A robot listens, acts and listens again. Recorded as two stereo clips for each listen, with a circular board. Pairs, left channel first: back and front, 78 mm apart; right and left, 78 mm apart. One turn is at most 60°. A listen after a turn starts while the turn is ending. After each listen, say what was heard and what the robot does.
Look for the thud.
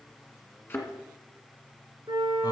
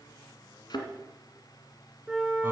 The thud: 115° right. Turn 60° right.
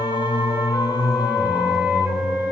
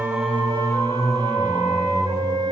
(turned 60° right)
Nothing new. It was at 55° right. Turn 55° right.
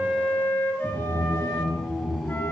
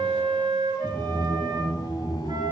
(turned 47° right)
Nothing new. It was at 10° right. Turn 10° right.
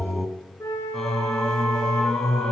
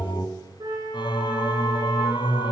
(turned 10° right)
I heard a thud from this way, but can't make it out now.